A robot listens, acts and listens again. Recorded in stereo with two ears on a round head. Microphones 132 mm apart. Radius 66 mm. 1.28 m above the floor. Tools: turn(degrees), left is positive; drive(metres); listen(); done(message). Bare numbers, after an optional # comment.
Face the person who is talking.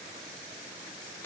listen()
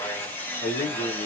# The man speaking: about 55° left or 125° left.
turn(55)
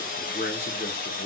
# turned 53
# So it is at 65° left.
turn(65)
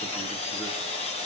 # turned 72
# Nothing new. It was at 10° right.
turn(-10)
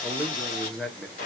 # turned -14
done("Found it: a man speaking, straight ahead.")